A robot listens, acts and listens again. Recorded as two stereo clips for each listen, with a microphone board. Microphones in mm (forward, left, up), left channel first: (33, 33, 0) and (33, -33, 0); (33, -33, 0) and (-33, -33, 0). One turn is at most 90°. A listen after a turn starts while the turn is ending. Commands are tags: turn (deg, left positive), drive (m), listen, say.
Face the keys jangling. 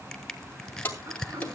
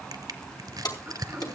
<turn deg="25"/>
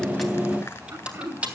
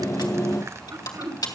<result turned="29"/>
<turn deg="-20"/>
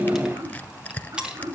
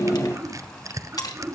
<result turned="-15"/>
<turn deg="-15"/>
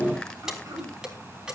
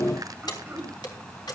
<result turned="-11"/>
<turn deg="-15"/>
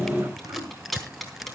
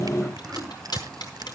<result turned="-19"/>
<say>Facing the keys jangling.</say>